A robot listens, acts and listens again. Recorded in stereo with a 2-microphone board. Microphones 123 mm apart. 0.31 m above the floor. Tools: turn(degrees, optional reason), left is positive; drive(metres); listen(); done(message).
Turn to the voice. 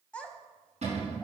turn(degrees=30)
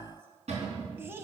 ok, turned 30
turn(degrees=-20, reason="So it is at 20° right.")
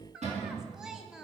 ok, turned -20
done("Found it: a child speaking, straight ahead, 1 to 2 m away.")